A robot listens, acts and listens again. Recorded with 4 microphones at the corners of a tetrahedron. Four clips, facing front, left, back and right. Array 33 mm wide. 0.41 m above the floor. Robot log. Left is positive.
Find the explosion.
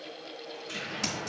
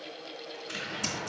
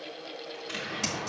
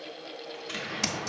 note: The explosion: 120° right.
cmd yaw -120
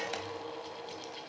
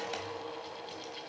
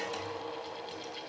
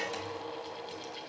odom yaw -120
end: Facing where the explosion came from. I can't hear it now.